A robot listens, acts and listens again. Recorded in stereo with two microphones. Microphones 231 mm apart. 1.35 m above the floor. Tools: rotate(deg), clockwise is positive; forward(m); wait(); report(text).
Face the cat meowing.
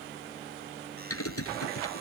wait()
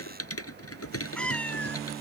rotate(-30)
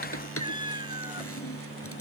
rotate(20)
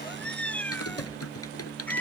report("Found it: a cat meowing, straight ahead.")